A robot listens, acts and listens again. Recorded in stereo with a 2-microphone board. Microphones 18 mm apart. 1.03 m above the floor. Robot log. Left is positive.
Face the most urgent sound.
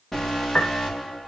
note: The alarm: about 20° left or 160° left.
cmd yaw +20
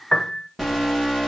end: Facing the alarm, over 4 m away.